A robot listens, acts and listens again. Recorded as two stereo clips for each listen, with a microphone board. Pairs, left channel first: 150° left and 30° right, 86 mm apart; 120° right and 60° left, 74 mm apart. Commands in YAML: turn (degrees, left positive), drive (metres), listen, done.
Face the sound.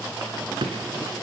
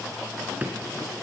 turn: -10
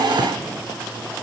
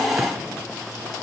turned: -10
listen: true
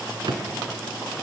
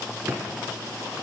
done: "Found it: a drawer, straight ahead, 2 to 4 m away."